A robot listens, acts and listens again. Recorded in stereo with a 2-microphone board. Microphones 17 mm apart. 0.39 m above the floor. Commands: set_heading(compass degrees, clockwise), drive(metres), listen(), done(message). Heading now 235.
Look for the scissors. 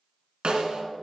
listen()
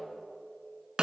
listen()
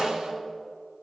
done("I can't make out scissors, only a snare drum.")